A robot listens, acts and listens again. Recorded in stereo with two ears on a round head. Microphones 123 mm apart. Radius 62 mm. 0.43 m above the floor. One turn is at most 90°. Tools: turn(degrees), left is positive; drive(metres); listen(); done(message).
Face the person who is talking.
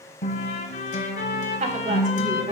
turn(degrees=-60)
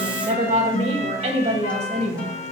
turn(degrees=-55)
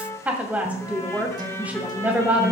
turn(degrees=-10)
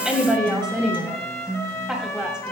done("Facing the woman speaking.")